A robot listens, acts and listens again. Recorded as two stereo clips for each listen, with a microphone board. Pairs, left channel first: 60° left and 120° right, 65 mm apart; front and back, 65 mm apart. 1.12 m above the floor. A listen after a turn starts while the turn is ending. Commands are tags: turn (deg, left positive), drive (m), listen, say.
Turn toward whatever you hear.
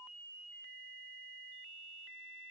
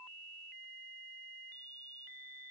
<listen/>
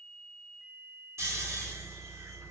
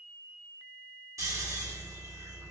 <turn deg="-155"/>
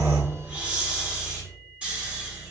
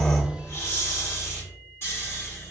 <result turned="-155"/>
<turn deg="-50"/>
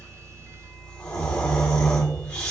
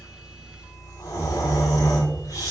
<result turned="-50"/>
<turn deg="-10"/>
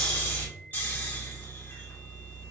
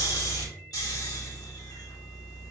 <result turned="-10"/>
<say>Found it: snoring, straight ahead, 1 to 2 m away.</say>